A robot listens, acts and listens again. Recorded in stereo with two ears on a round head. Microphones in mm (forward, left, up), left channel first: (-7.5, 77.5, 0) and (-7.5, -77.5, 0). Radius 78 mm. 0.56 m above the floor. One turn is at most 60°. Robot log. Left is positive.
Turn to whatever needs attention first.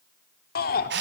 note: The shout: about 55° left or 125° left.
cmd yaw +55
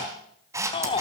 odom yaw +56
note: So it is at 35° left.
cmd yaw +35
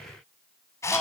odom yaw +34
end: Found it: a shout, straight ahead.